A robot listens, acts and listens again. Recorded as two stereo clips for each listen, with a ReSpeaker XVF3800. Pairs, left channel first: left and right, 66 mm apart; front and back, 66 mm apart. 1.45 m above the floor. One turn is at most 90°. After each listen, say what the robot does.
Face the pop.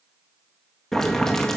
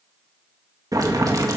Keep listening.
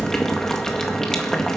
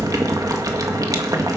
Keep listening.
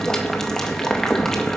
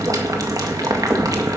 I can't make out a pop, only boiling.